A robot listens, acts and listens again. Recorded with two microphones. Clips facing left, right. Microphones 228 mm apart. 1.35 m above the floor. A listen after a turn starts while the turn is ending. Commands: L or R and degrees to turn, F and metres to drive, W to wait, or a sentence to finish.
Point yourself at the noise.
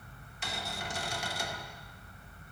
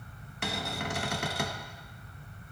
R65
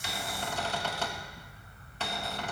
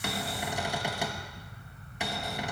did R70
R15
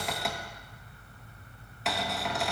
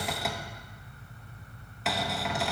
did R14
Facing the cupboard door, under 1 m away.